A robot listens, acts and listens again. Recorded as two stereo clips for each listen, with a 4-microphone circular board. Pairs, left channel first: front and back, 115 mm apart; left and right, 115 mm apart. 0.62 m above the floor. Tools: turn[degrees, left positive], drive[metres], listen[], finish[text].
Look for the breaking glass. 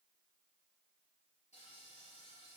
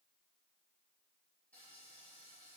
Action: listen[]
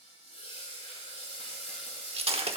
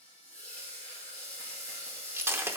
Thought: The breaking glass: 155° right.
Action: turn[-155]
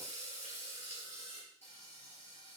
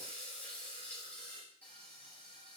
Action: finish[I heard breaking glass from this way, but can't make it out now.]